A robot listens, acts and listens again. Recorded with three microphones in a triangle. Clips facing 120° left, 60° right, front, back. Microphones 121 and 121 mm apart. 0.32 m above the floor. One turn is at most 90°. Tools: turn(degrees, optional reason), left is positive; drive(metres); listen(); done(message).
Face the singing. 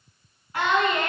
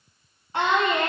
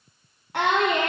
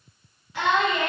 done("Found it: singing, straight ahead, 1 to 2 m away.")